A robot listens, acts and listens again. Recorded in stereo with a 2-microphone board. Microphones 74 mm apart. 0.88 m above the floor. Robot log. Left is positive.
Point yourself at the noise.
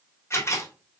note: The camera shutter: about 35° left or 145° left.
cmd yaw +35
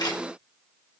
note: So it is at 110° left.
cmd yaw +110
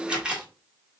note: The camera shutter is now 15° right.
cmd yaw -15
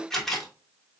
end: Facing the camera shutter.